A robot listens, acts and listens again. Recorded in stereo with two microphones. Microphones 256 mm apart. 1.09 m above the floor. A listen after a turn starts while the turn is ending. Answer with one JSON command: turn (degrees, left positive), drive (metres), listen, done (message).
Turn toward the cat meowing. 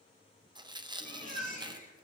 {"turn": 40}
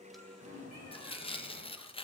{"turn": 100}
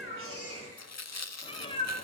{"turn": 20}
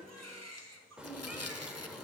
{"done": "Facing the cat meowing."}